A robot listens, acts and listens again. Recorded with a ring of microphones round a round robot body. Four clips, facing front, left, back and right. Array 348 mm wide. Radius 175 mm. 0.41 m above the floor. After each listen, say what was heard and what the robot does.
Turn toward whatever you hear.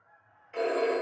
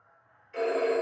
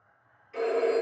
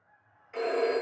The phone ringing: 60° right. Turn 60° right.
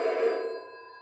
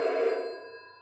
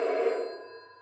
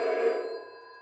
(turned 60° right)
The phone ringing is now 25° right. Turn 25° right.
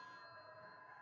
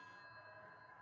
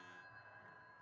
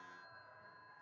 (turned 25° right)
Keep listening.
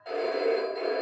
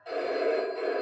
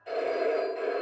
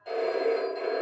Found it: a phone ringing, straight ahead.